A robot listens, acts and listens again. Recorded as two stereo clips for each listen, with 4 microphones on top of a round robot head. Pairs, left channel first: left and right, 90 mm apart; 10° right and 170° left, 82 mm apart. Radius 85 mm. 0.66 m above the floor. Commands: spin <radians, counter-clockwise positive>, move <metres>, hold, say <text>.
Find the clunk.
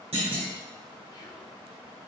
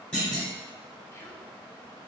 spin -1.57
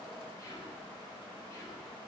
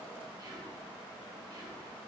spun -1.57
say I heard a clunk from this way, but can't make it out now.